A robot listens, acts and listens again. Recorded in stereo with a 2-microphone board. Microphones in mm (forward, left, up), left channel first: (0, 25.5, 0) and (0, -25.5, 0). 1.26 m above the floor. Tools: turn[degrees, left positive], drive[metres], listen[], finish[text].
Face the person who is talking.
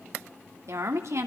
Thought: The woman speaking: about 70° right or 110° right.
Action: turn[-70]
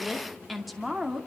Action: finish[Found it: a woman speaking, straight ahead, 2 to 4 m away.]